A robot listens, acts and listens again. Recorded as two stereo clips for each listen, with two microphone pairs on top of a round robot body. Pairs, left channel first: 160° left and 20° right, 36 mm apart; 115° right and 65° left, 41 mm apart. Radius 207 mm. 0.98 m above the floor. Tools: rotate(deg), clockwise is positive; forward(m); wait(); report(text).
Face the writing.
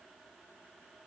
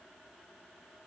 wait()
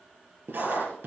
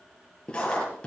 rotate(50)
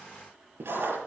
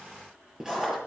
rotate(10)
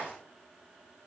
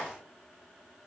wait()
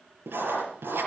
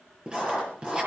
report("Found it: writing, straight ahead.")